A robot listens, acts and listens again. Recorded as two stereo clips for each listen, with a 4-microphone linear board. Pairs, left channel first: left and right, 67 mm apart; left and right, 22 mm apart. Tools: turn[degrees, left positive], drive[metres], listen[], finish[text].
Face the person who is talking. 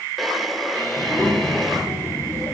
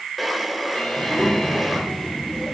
Thought: The child speaking: about 55° left or 125° left.
Action: turn[55]
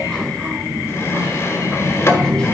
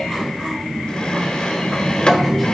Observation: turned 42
Thought: So it is at 15° left.
Action: turn[15]
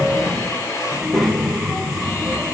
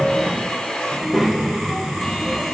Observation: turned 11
Action: finish[Facing the child speaking, 2 to 4 m away.]